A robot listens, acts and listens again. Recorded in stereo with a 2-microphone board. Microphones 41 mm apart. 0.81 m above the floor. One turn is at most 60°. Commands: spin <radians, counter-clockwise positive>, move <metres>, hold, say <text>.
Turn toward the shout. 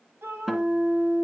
spin -1.05
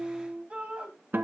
spin -0.52
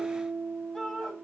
spin 0.26
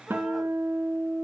hold
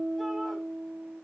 hold
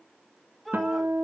say Found it: a shout, straight ahead, over 4 m away.